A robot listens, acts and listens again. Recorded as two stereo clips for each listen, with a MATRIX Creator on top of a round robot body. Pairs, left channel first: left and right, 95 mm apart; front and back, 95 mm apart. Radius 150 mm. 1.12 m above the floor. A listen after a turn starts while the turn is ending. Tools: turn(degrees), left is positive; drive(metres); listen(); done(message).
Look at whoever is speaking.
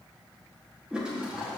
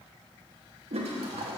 listen()
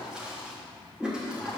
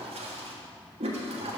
listen()
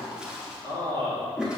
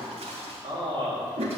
turn(degrees=-140)
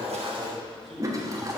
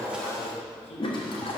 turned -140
done("Found it: a man speaking, straight ahead.")